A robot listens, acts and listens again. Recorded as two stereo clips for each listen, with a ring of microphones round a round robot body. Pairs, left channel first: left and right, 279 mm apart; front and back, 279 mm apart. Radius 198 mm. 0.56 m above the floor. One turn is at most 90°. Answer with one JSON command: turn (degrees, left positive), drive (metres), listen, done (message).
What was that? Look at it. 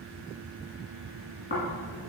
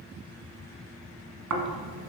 {"turn": 90}
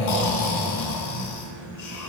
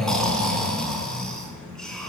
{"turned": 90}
{"turn": 90}
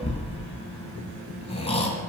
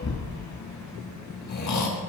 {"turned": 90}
{"turn": 20}
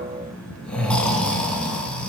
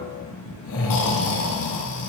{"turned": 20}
{"done": "Found it: snoring, straight ahead."}